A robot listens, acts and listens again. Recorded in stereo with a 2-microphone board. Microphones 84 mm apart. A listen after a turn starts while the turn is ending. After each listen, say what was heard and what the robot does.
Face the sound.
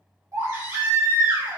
The baby crying: about 40° right or 140° right. Turn 40° right.
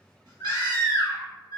So it is at 95° right. Turn 95° right.
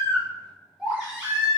The baby crying is now 15° right. Turn 15° right.
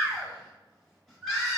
Found it: a baby crying, straight ahead.